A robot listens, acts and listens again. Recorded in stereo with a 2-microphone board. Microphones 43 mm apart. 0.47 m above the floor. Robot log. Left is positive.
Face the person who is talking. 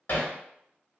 cmd idle
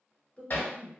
note: The woman speaking: about 30° left or 150° left.
cmd yaw +30
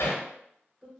end: Found it: a woman speaking, straight ahead, 1 to 2 m away.